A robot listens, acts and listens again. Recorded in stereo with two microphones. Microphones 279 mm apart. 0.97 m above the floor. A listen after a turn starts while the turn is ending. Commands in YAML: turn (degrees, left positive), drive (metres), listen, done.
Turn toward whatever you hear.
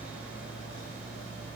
listen: true
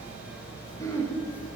turn: 30
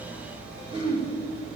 turn: -20
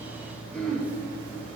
done: "Facing the throat clearing, 1 to 2 m away."